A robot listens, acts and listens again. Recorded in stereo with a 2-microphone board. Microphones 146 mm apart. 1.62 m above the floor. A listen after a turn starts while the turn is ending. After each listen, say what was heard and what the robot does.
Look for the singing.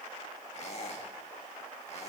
Keep listening.
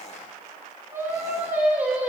Turn 30° right.
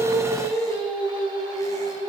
So it is at 145° right. Turn 145° right.
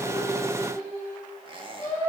The singing is now 15° left. Turn 15° left.
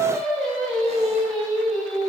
Found it: singing, straight ahead.